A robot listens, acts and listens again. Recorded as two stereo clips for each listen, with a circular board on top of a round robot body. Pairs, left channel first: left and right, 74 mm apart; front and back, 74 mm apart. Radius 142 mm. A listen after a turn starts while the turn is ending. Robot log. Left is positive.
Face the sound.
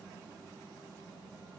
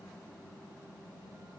cmd idle
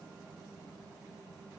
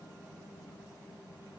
cmd idle
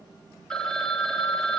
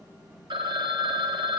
note: The phone ringing: 170° left.
cmd yaw +170
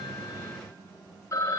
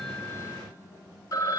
note: The phone ringing is now 40° left.
cmd yaw +40
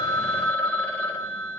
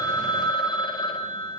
note: The phone ringing is now 20° left.
cmd yaw +20
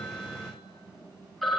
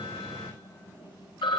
end: Found it: a phone ringing, straight ahead, 2 to 4 m away.